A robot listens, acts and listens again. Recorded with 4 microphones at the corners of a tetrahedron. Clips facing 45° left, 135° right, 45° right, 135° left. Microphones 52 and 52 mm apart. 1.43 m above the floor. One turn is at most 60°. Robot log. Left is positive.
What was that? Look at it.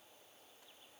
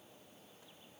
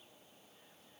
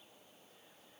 cmd idle
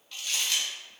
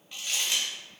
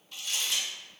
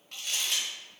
note: The crumpling: 150° left.
cmd yaw +60
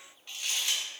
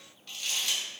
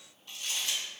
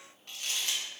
note: The crumpling is now 110° left.
cmd yaw +60
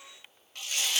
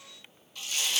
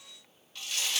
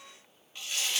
note: The crumpling is now 65° left.
cmd yaw +60
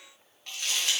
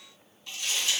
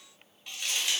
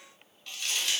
note: The crumpling is now 25° left.
cmd yaw +25
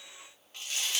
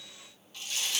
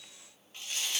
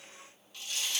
end: Facing the crumpling, 1 to 2 m away.